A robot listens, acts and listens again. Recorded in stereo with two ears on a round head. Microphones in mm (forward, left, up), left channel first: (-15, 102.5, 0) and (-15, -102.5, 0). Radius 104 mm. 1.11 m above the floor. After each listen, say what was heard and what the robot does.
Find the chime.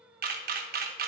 Keep listening.
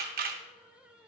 Keep listening.
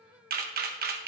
I can't make out a chime to turn to.